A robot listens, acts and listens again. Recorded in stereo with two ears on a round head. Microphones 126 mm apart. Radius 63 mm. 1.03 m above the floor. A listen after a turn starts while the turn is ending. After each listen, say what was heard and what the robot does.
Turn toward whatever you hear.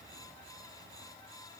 Keep listening.
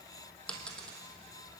Turn 30° left.
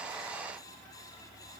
Keep listening.
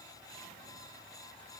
I heard a dropped coin, but can't make it out now. It was about 25° right or 145° left.